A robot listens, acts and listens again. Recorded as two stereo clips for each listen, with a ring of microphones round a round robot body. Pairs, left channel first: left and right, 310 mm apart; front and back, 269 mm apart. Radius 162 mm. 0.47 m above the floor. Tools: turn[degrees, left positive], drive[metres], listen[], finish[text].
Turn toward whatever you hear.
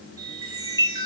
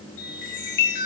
Thought: The chime: 10° right.
Action: turn[-10]
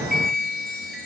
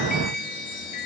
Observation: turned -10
Action: finish[Facing the chime.]